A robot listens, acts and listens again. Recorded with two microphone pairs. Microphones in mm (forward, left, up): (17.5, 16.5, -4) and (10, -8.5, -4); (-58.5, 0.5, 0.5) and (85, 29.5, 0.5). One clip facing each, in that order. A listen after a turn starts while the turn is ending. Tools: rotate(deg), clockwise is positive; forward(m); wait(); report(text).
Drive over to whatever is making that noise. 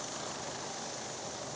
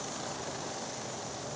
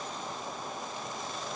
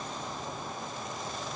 wait()
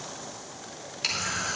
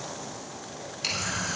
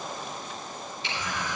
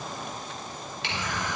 forward(1.0)
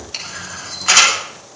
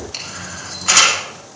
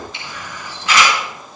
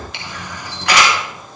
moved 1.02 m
forward(1.0)
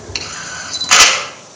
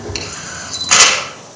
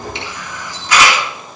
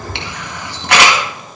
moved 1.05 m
forward(1.0)
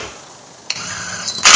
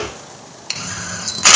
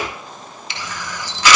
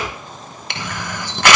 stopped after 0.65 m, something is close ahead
report("Arrived at the camera shutter, straight ahead.")